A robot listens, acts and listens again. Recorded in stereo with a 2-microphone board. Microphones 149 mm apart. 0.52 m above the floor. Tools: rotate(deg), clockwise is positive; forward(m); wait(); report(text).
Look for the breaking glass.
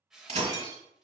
rotate(45)
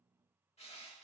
wait()
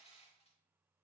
report("I heard breaking glass, but can't make it out now. It was about straight ahead or 90° right.")